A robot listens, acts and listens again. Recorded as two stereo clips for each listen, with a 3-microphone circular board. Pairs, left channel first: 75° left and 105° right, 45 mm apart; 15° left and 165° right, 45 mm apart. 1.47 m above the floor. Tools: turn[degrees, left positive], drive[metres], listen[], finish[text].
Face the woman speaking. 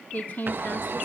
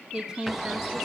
Thought: The woman speaking: 125° left.
Action: turn[125]
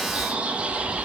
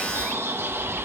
Action: listen[]
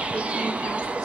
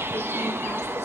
Action: listen[]
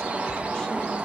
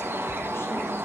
Action: finish[I heard a woman speaking from this way, but can't make it out now.]